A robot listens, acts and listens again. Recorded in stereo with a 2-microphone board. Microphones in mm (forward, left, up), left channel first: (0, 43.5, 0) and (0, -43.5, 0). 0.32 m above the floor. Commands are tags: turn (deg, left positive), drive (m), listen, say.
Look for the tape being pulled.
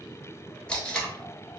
<turn deg="30"/>
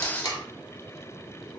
<turn deg="140"/>
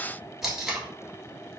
<say>Facing the tape being pulled.</say>